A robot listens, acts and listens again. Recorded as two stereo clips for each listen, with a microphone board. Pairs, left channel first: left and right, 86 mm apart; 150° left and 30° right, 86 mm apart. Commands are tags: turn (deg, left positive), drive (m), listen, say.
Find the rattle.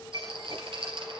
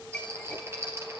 <turn deg="-90"/>
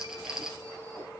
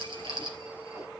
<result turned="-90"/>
<turn deg="-10"/>
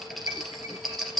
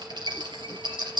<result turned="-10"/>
<say>Found it: a rattle, straight ahead.</say>